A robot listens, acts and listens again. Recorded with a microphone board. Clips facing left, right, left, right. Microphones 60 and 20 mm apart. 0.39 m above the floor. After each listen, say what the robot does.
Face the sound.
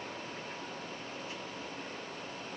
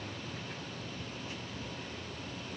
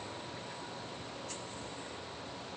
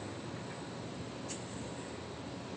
Keep listening.
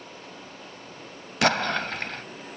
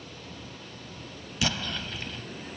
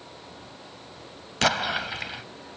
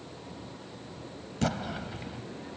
Turn 65° left.
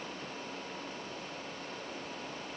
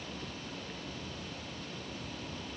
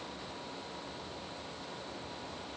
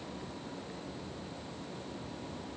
Keep listening.
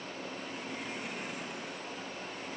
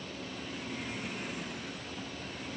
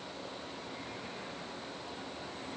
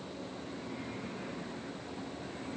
I heard an explosion, but can't make it out now. It was about straight ahead or 50° left.